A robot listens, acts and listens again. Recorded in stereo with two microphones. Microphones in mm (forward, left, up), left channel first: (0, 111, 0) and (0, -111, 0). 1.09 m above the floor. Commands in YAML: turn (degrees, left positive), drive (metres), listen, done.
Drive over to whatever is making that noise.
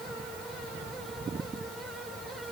listen: true
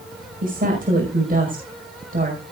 turn: -40
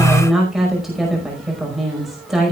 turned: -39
drive: 1.0
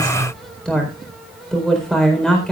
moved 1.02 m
drive: 1.0
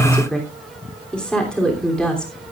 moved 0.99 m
drive: 1.0
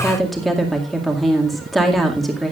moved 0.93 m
drive: 1.0
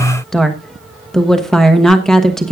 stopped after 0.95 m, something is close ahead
done: "I am next to the woman speaking."